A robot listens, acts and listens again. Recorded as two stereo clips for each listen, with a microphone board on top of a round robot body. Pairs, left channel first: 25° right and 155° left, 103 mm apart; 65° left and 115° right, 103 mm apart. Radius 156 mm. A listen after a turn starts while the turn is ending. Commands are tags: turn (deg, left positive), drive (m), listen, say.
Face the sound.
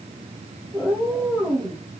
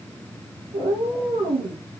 <turn deg="-125"/>
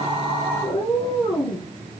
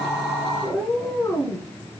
<say>Found it: a cat meowing, straight ahead, 2 to 4 m away.</say>